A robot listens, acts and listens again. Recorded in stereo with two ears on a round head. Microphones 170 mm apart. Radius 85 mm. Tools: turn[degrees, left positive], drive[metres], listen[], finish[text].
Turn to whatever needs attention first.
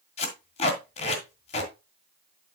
Action: listen[]
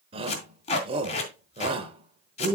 Thought: The shout: about 30° right or 150° right.
Action: turn[-30]
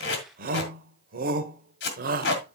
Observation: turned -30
Thought: So it is at 110° right.
Action: turn[-110]
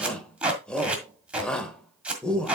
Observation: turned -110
Action: finish[Found it: a shout, straight ahead, 1 to 2 m away.]